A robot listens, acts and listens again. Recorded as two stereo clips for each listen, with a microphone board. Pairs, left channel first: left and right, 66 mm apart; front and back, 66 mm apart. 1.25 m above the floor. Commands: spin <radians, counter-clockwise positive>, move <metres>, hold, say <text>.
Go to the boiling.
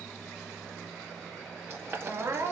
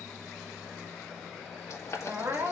spin -0.70
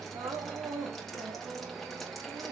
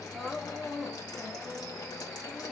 hold
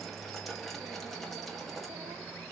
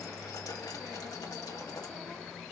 hold
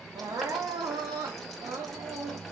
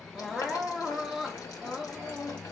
say Facing where the boiling came from. I can't hear it now. I did not reach it.